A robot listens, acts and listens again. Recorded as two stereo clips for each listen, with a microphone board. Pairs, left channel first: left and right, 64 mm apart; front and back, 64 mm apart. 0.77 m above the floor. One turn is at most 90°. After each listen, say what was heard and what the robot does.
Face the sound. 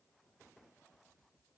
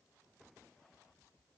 Keep listening.
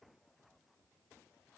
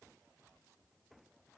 Keep listening.
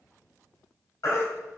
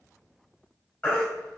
The baby crying: 60° left. Turn 60° left.
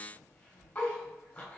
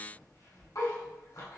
Keep listening.
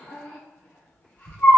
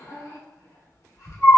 The baby crying is now 25° left. Turn 25° left.
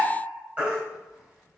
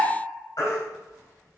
The baby crying is now 25° right. Turn 25° right.
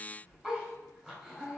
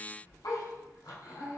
Keep listening.
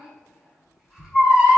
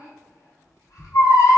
The baby crying is now 10° right. Turn 10° right.
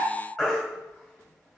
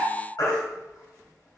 Found it: a baby crying, straight ahead, 1 to 2 m away.